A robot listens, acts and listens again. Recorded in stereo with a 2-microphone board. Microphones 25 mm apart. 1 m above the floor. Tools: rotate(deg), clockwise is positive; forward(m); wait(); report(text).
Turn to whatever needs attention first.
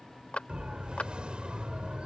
rotate(45)
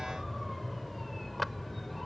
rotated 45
report("Found it: a siren, straight ahead.")